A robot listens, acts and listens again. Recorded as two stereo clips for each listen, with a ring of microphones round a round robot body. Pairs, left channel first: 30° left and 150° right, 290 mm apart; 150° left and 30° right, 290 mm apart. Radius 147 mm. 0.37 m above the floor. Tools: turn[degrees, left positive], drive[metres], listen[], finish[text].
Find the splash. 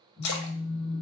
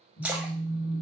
Thought: The splash: 55° left.
Action: turn[55]
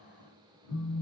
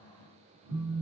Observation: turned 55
Action: finish[Facing where the splash came from. I can't hear it now.]